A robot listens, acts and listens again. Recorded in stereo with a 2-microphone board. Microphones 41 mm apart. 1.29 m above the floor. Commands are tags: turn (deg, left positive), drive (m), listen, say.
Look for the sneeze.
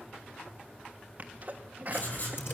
<turn deg="-40"/>
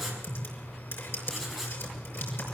<listen/>
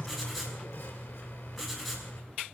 <say>I heard a sneeze, but can't make it out now. It was about straight ahead or 100° right.</say>